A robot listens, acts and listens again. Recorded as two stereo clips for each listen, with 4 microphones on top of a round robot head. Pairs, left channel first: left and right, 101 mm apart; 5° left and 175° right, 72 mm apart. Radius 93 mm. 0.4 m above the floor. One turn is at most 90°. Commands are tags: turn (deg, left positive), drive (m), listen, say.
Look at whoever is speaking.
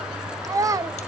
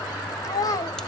<turn deg="-35"/>
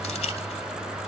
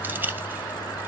<listen/>
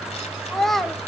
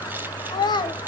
<say>Facing the child speaking.</say>